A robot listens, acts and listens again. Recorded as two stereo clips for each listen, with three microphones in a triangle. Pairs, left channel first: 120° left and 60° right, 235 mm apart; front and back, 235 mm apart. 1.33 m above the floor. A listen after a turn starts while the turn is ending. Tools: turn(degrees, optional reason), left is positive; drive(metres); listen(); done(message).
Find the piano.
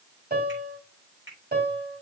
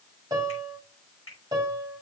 turn(degrees=-110, reason="The piano: 110° right.")
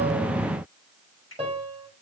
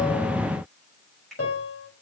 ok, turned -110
done("Facing the piano, 2 to 4 m away.")